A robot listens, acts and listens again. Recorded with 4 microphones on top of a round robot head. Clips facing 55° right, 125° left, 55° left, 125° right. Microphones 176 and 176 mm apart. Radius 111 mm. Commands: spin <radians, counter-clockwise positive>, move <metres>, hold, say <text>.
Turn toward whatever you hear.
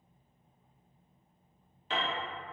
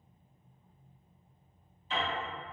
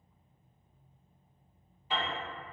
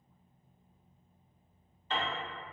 spin -0.44
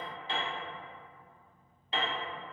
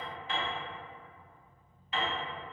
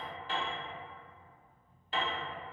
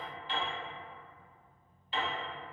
say Found it: a piano, straight ahead, under 1 m away.